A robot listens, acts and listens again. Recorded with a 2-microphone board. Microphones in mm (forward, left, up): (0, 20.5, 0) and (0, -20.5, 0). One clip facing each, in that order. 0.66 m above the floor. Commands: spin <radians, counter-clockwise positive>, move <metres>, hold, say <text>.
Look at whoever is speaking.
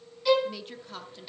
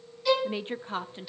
spin -0.61
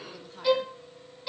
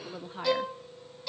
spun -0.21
spin -0.44
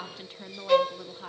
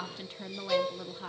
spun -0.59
say Found it: a woman speaking, straight ahead.